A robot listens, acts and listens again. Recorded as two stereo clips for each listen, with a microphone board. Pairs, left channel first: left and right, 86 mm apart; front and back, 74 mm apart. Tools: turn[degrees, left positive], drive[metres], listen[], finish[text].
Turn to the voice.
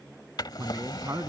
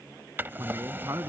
Thought: The man speaking: 140° right.
Action: turn[-140]
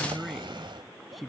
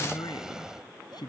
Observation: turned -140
Action: finish[Facing the man speaking.]